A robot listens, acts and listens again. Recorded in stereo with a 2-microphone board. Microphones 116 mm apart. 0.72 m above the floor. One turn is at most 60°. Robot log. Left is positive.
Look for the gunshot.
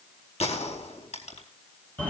note: The gunshot: about 65° left or 115° left.
cmd yaw +60
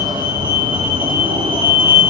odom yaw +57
cmd idle
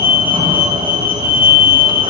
end: I heard a gunshot, but can't make it out now. It was about 10° left or 60° left.